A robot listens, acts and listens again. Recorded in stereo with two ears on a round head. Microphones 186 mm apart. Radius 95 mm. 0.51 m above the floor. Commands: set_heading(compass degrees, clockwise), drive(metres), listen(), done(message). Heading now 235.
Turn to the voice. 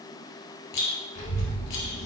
set_heading(145)
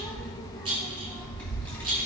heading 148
set_heading(138)
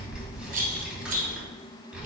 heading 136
done("Facing the child speaking.")